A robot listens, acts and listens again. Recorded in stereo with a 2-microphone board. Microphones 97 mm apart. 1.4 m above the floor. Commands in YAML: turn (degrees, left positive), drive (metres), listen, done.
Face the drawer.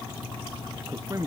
listen: true
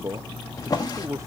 turn: 40
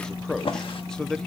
turn: 95
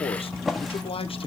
done: "Found it: a drawer, straight ahead, 1 to 2 m away."